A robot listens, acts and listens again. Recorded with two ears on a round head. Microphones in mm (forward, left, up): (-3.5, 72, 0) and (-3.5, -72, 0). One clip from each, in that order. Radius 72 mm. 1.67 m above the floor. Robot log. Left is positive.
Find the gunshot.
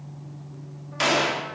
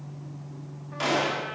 note: The gunshot: about 50° left or 130° left.
cmd yaw +50
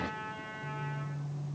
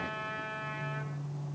cmd idle
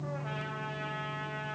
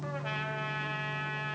end: I heard a gunshot, but can't make it out now. It was about straight ahead or 80° left.